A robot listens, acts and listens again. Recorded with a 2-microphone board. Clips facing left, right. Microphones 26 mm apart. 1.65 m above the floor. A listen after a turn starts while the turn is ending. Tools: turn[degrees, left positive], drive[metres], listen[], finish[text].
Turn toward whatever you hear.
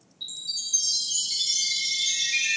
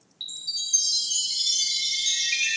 Thought: The chime: about 45° right or 135° right.
Action: turn[-45]
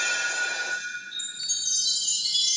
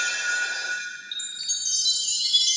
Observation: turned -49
Thought: So it is at 80° right.
Action: turn[-80]
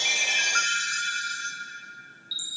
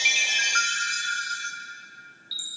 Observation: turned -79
Action: finish[Found it: a chime, straight ahead, 1 to 2 m away.]